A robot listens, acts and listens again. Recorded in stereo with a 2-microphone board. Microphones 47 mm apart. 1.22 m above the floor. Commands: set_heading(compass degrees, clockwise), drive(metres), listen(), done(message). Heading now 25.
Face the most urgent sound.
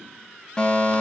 set_heading(5)
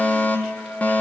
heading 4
set_heading(229)
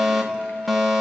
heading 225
done("Facing the fire alarm.")